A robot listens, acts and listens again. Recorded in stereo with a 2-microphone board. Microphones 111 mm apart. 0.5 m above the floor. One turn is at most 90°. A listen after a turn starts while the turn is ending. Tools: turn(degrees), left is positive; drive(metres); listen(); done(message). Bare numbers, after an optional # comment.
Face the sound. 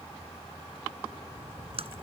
# The splash: about 60° right or 120° right.
turn(-60)
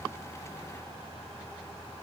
listen()
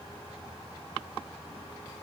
done("I heard a splash, but can't make it out now. It was about straight ahead or 60° right.")